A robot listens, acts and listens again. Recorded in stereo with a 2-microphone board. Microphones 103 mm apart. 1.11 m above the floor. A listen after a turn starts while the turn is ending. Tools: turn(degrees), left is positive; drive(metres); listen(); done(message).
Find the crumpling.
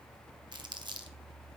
turn(degrees=-45)
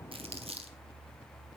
turn(degrees=-80)
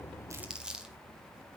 turn(degrees=-10)
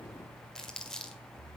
done("Facing the crumpling, 1 to 2 m away.")